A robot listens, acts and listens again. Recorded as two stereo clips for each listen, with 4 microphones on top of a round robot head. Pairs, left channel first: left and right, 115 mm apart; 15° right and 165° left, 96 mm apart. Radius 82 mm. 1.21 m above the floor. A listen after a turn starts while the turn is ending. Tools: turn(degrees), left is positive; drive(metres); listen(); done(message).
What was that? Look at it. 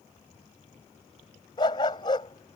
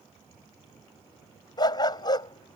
turn(degrees=30)
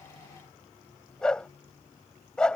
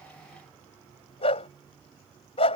done("Facing the dog barking.")